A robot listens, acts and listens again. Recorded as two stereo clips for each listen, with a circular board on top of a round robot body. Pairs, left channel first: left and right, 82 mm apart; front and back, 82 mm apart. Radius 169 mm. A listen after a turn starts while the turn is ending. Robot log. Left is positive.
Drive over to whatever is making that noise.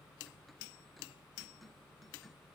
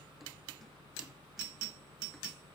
cmd idle
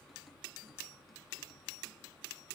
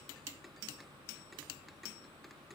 cmd idle
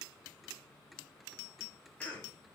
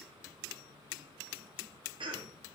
note: The cough: 165° left.
cmd yaw +165
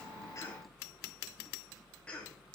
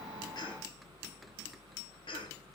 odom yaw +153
note: The cough is now 15° left.
cmd yaw +15
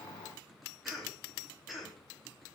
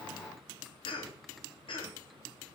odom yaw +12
cmd fwd 1.0
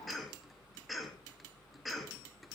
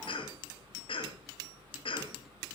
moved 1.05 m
cmd fwd 1.0
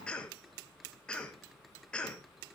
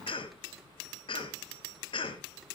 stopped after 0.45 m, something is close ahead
note: The cough is now 10° left.
cmd yaw +10
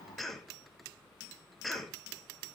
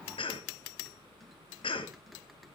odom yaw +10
end: Arrived at the cough, straight ahead.